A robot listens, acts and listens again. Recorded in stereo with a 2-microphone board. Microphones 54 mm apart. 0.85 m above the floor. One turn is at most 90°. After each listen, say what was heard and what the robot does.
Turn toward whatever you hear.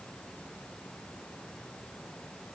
Keep listening.
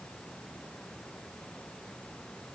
Keep listening.
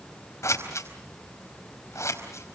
The scissors: about 65° left or 115° left. Turn 65° left.
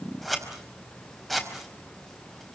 Found it: scissors, straight ahead.